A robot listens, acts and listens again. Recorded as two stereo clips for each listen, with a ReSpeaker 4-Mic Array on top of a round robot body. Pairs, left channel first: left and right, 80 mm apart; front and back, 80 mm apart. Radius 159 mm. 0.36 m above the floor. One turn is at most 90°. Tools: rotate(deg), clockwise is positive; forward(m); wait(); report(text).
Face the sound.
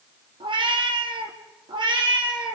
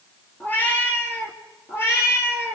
rotate(60)
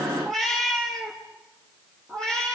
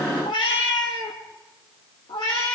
rotate(-10)
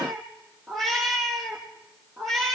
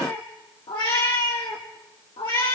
report("Facing the cat meowing, over 4 m away.")